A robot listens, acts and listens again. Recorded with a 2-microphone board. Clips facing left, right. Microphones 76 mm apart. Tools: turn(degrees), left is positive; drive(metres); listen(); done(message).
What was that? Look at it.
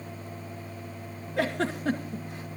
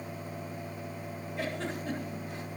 turn(degrees=90)
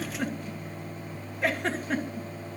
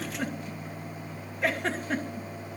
done("Found it: a giggle, straight ahead.")